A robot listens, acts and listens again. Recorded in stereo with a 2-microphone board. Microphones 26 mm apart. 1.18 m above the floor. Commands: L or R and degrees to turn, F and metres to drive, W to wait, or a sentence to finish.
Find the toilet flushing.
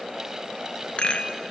W
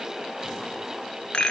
W
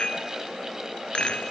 I can't make out a toilet flushing to turn to.